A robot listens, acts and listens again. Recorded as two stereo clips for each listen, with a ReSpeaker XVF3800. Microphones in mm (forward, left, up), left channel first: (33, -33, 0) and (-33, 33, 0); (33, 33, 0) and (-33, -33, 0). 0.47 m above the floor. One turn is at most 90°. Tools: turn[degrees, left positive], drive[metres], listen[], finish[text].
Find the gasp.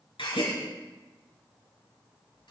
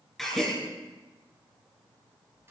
Thought: The gasp: 45° right.
Action: turn[-45]
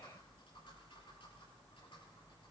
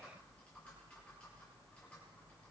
Action: finish[I heard a gasp from this way, but can't make it out now.]